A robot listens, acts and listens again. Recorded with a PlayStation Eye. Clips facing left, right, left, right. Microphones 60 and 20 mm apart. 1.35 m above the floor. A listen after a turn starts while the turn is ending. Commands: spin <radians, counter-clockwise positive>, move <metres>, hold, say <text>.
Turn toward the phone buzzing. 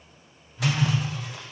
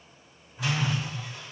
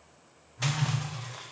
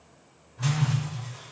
spin -0.52
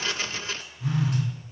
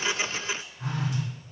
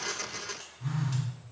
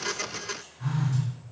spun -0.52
spin -2.53
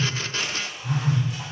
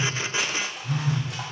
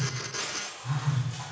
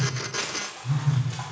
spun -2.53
spin 0.44
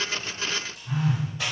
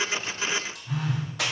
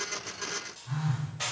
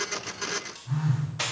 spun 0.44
say Found it: a phone buzzing, straight ahead.